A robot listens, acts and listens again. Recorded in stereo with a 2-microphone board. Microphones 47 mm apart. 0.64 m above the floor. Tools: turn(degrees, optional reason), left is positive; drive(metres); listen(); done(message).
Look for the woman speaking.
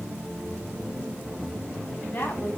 turn(degrees=50, reason="The woman speaking: about 50° left or 130° left.")
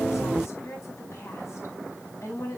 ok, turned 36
turn(degrees=95, reason="So it is at 95° left.")
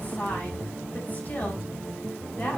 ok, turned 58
turn(degrees=35, reason="The woman speaking is now 35° left.")
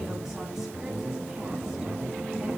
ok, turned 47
turn(degrees=-10, reason="Nothing new. It was at 10° right.")
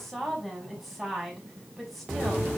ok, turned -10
done("Found it: a woman speaking, straight ahead, over 4 m away.")